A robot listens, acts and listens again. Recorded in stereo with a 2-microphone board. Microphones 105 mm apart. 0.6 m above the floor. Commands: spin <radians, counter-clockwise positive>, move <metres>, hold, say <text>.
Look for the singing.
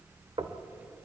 hold
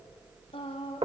spin 1.13
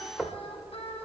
hold
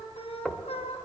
spin 1.22
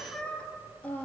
spin 0.26
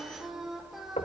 say Found it: singing, straight ahead.